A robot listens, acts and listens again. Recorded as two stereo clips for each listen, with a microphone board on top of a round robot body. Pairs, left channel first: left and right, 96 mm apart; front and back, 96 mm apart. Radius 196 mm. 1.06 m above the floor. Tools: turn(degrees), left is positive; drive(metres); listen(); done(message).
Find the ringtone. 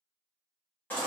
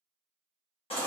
listen()
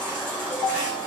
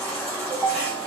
turn(degrees=115)
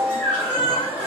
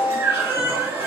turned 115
turn(degrees=-10)
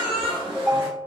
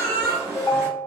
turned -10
done("Found it: a ringtone, straight ahead.")